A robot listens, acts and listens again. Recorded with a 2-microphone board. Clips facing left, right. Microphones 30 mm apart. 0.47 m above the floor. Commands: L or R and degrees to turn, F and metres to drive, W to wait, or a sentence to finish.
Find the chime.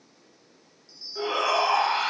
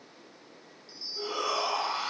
R25
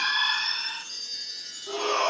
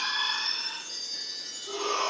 Found it: a chime, straight ahead.